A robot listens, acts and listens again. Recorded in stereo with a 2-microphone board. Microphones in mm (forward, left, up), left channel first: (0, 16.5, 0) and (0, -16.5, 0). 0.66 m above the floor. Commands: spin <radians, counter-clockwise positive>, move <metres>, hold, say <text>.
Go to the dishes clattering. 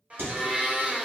spin -1.13
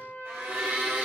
hold
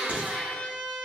hold
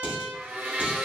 spin -0.87
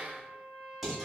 spin -0.17
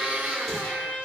hold
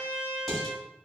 move 1.0
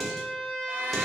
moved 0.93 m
move 1.0
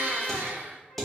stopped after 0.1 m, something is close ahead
say I am next to the dishes clattering.